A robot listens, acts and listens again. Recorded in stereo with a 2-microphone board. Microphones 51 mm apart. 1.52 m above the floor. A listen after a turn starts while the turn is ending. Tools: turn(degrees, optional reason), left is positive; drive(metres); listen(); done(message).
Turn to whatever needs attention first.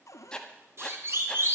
turn(degrees=-55, reason="The siren: about 55° right or 125° right.")
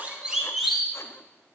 done("Found it: a siren, straight ahead, over 4 m away.")